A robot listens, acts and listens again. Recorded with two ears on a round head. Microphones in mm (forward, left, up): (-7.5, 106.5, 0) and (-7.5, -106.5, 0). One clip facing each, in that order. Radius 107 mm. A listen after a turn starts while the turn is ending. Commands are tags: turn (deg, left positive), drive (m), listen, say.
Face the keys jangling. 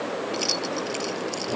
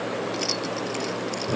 <turn deg="30"/>
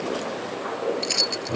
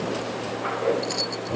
<turn deg="140"/>
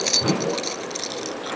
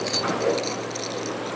<turn deg="20"/>
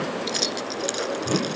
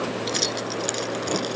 <say>Found it: keys jangling, straight ahead.</say>